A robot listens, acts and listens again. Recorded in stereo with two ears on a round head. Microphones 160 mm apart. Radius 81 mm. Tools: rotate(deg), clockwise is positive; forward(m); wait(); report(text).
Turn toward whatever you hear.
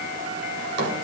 rotate(70)
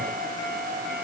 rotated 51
wait()
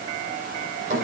rotate(45)
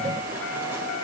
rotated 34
rotate(15)
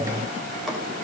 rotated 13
wait()
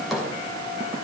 report("Facing the drawer.")